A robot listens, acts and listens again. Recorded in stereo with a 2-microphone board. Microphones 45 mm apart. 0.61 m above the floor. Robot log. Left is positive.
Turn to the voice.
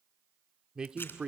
note: The man speaking: about 20° right or 160° right.
cmd yaw -20
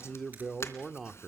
end: Found it: a man speaking, straight ahead, 1 to 2 m away.